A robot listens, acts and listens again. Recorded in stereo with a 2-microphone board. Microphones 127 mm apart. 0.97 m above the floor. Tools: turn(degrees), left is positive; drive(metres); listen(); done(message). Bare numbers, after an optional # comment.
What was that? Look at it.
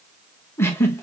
# The giggle: about 20° left or 160° left.
turn(20)
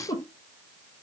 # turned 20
# So it is at 140° left.
turn(140)
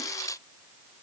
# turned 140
listen()
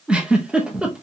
# The giggle is now 10° right.
turn(-10)
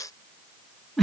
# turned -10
done("Found it: a giggle, straight ahead.")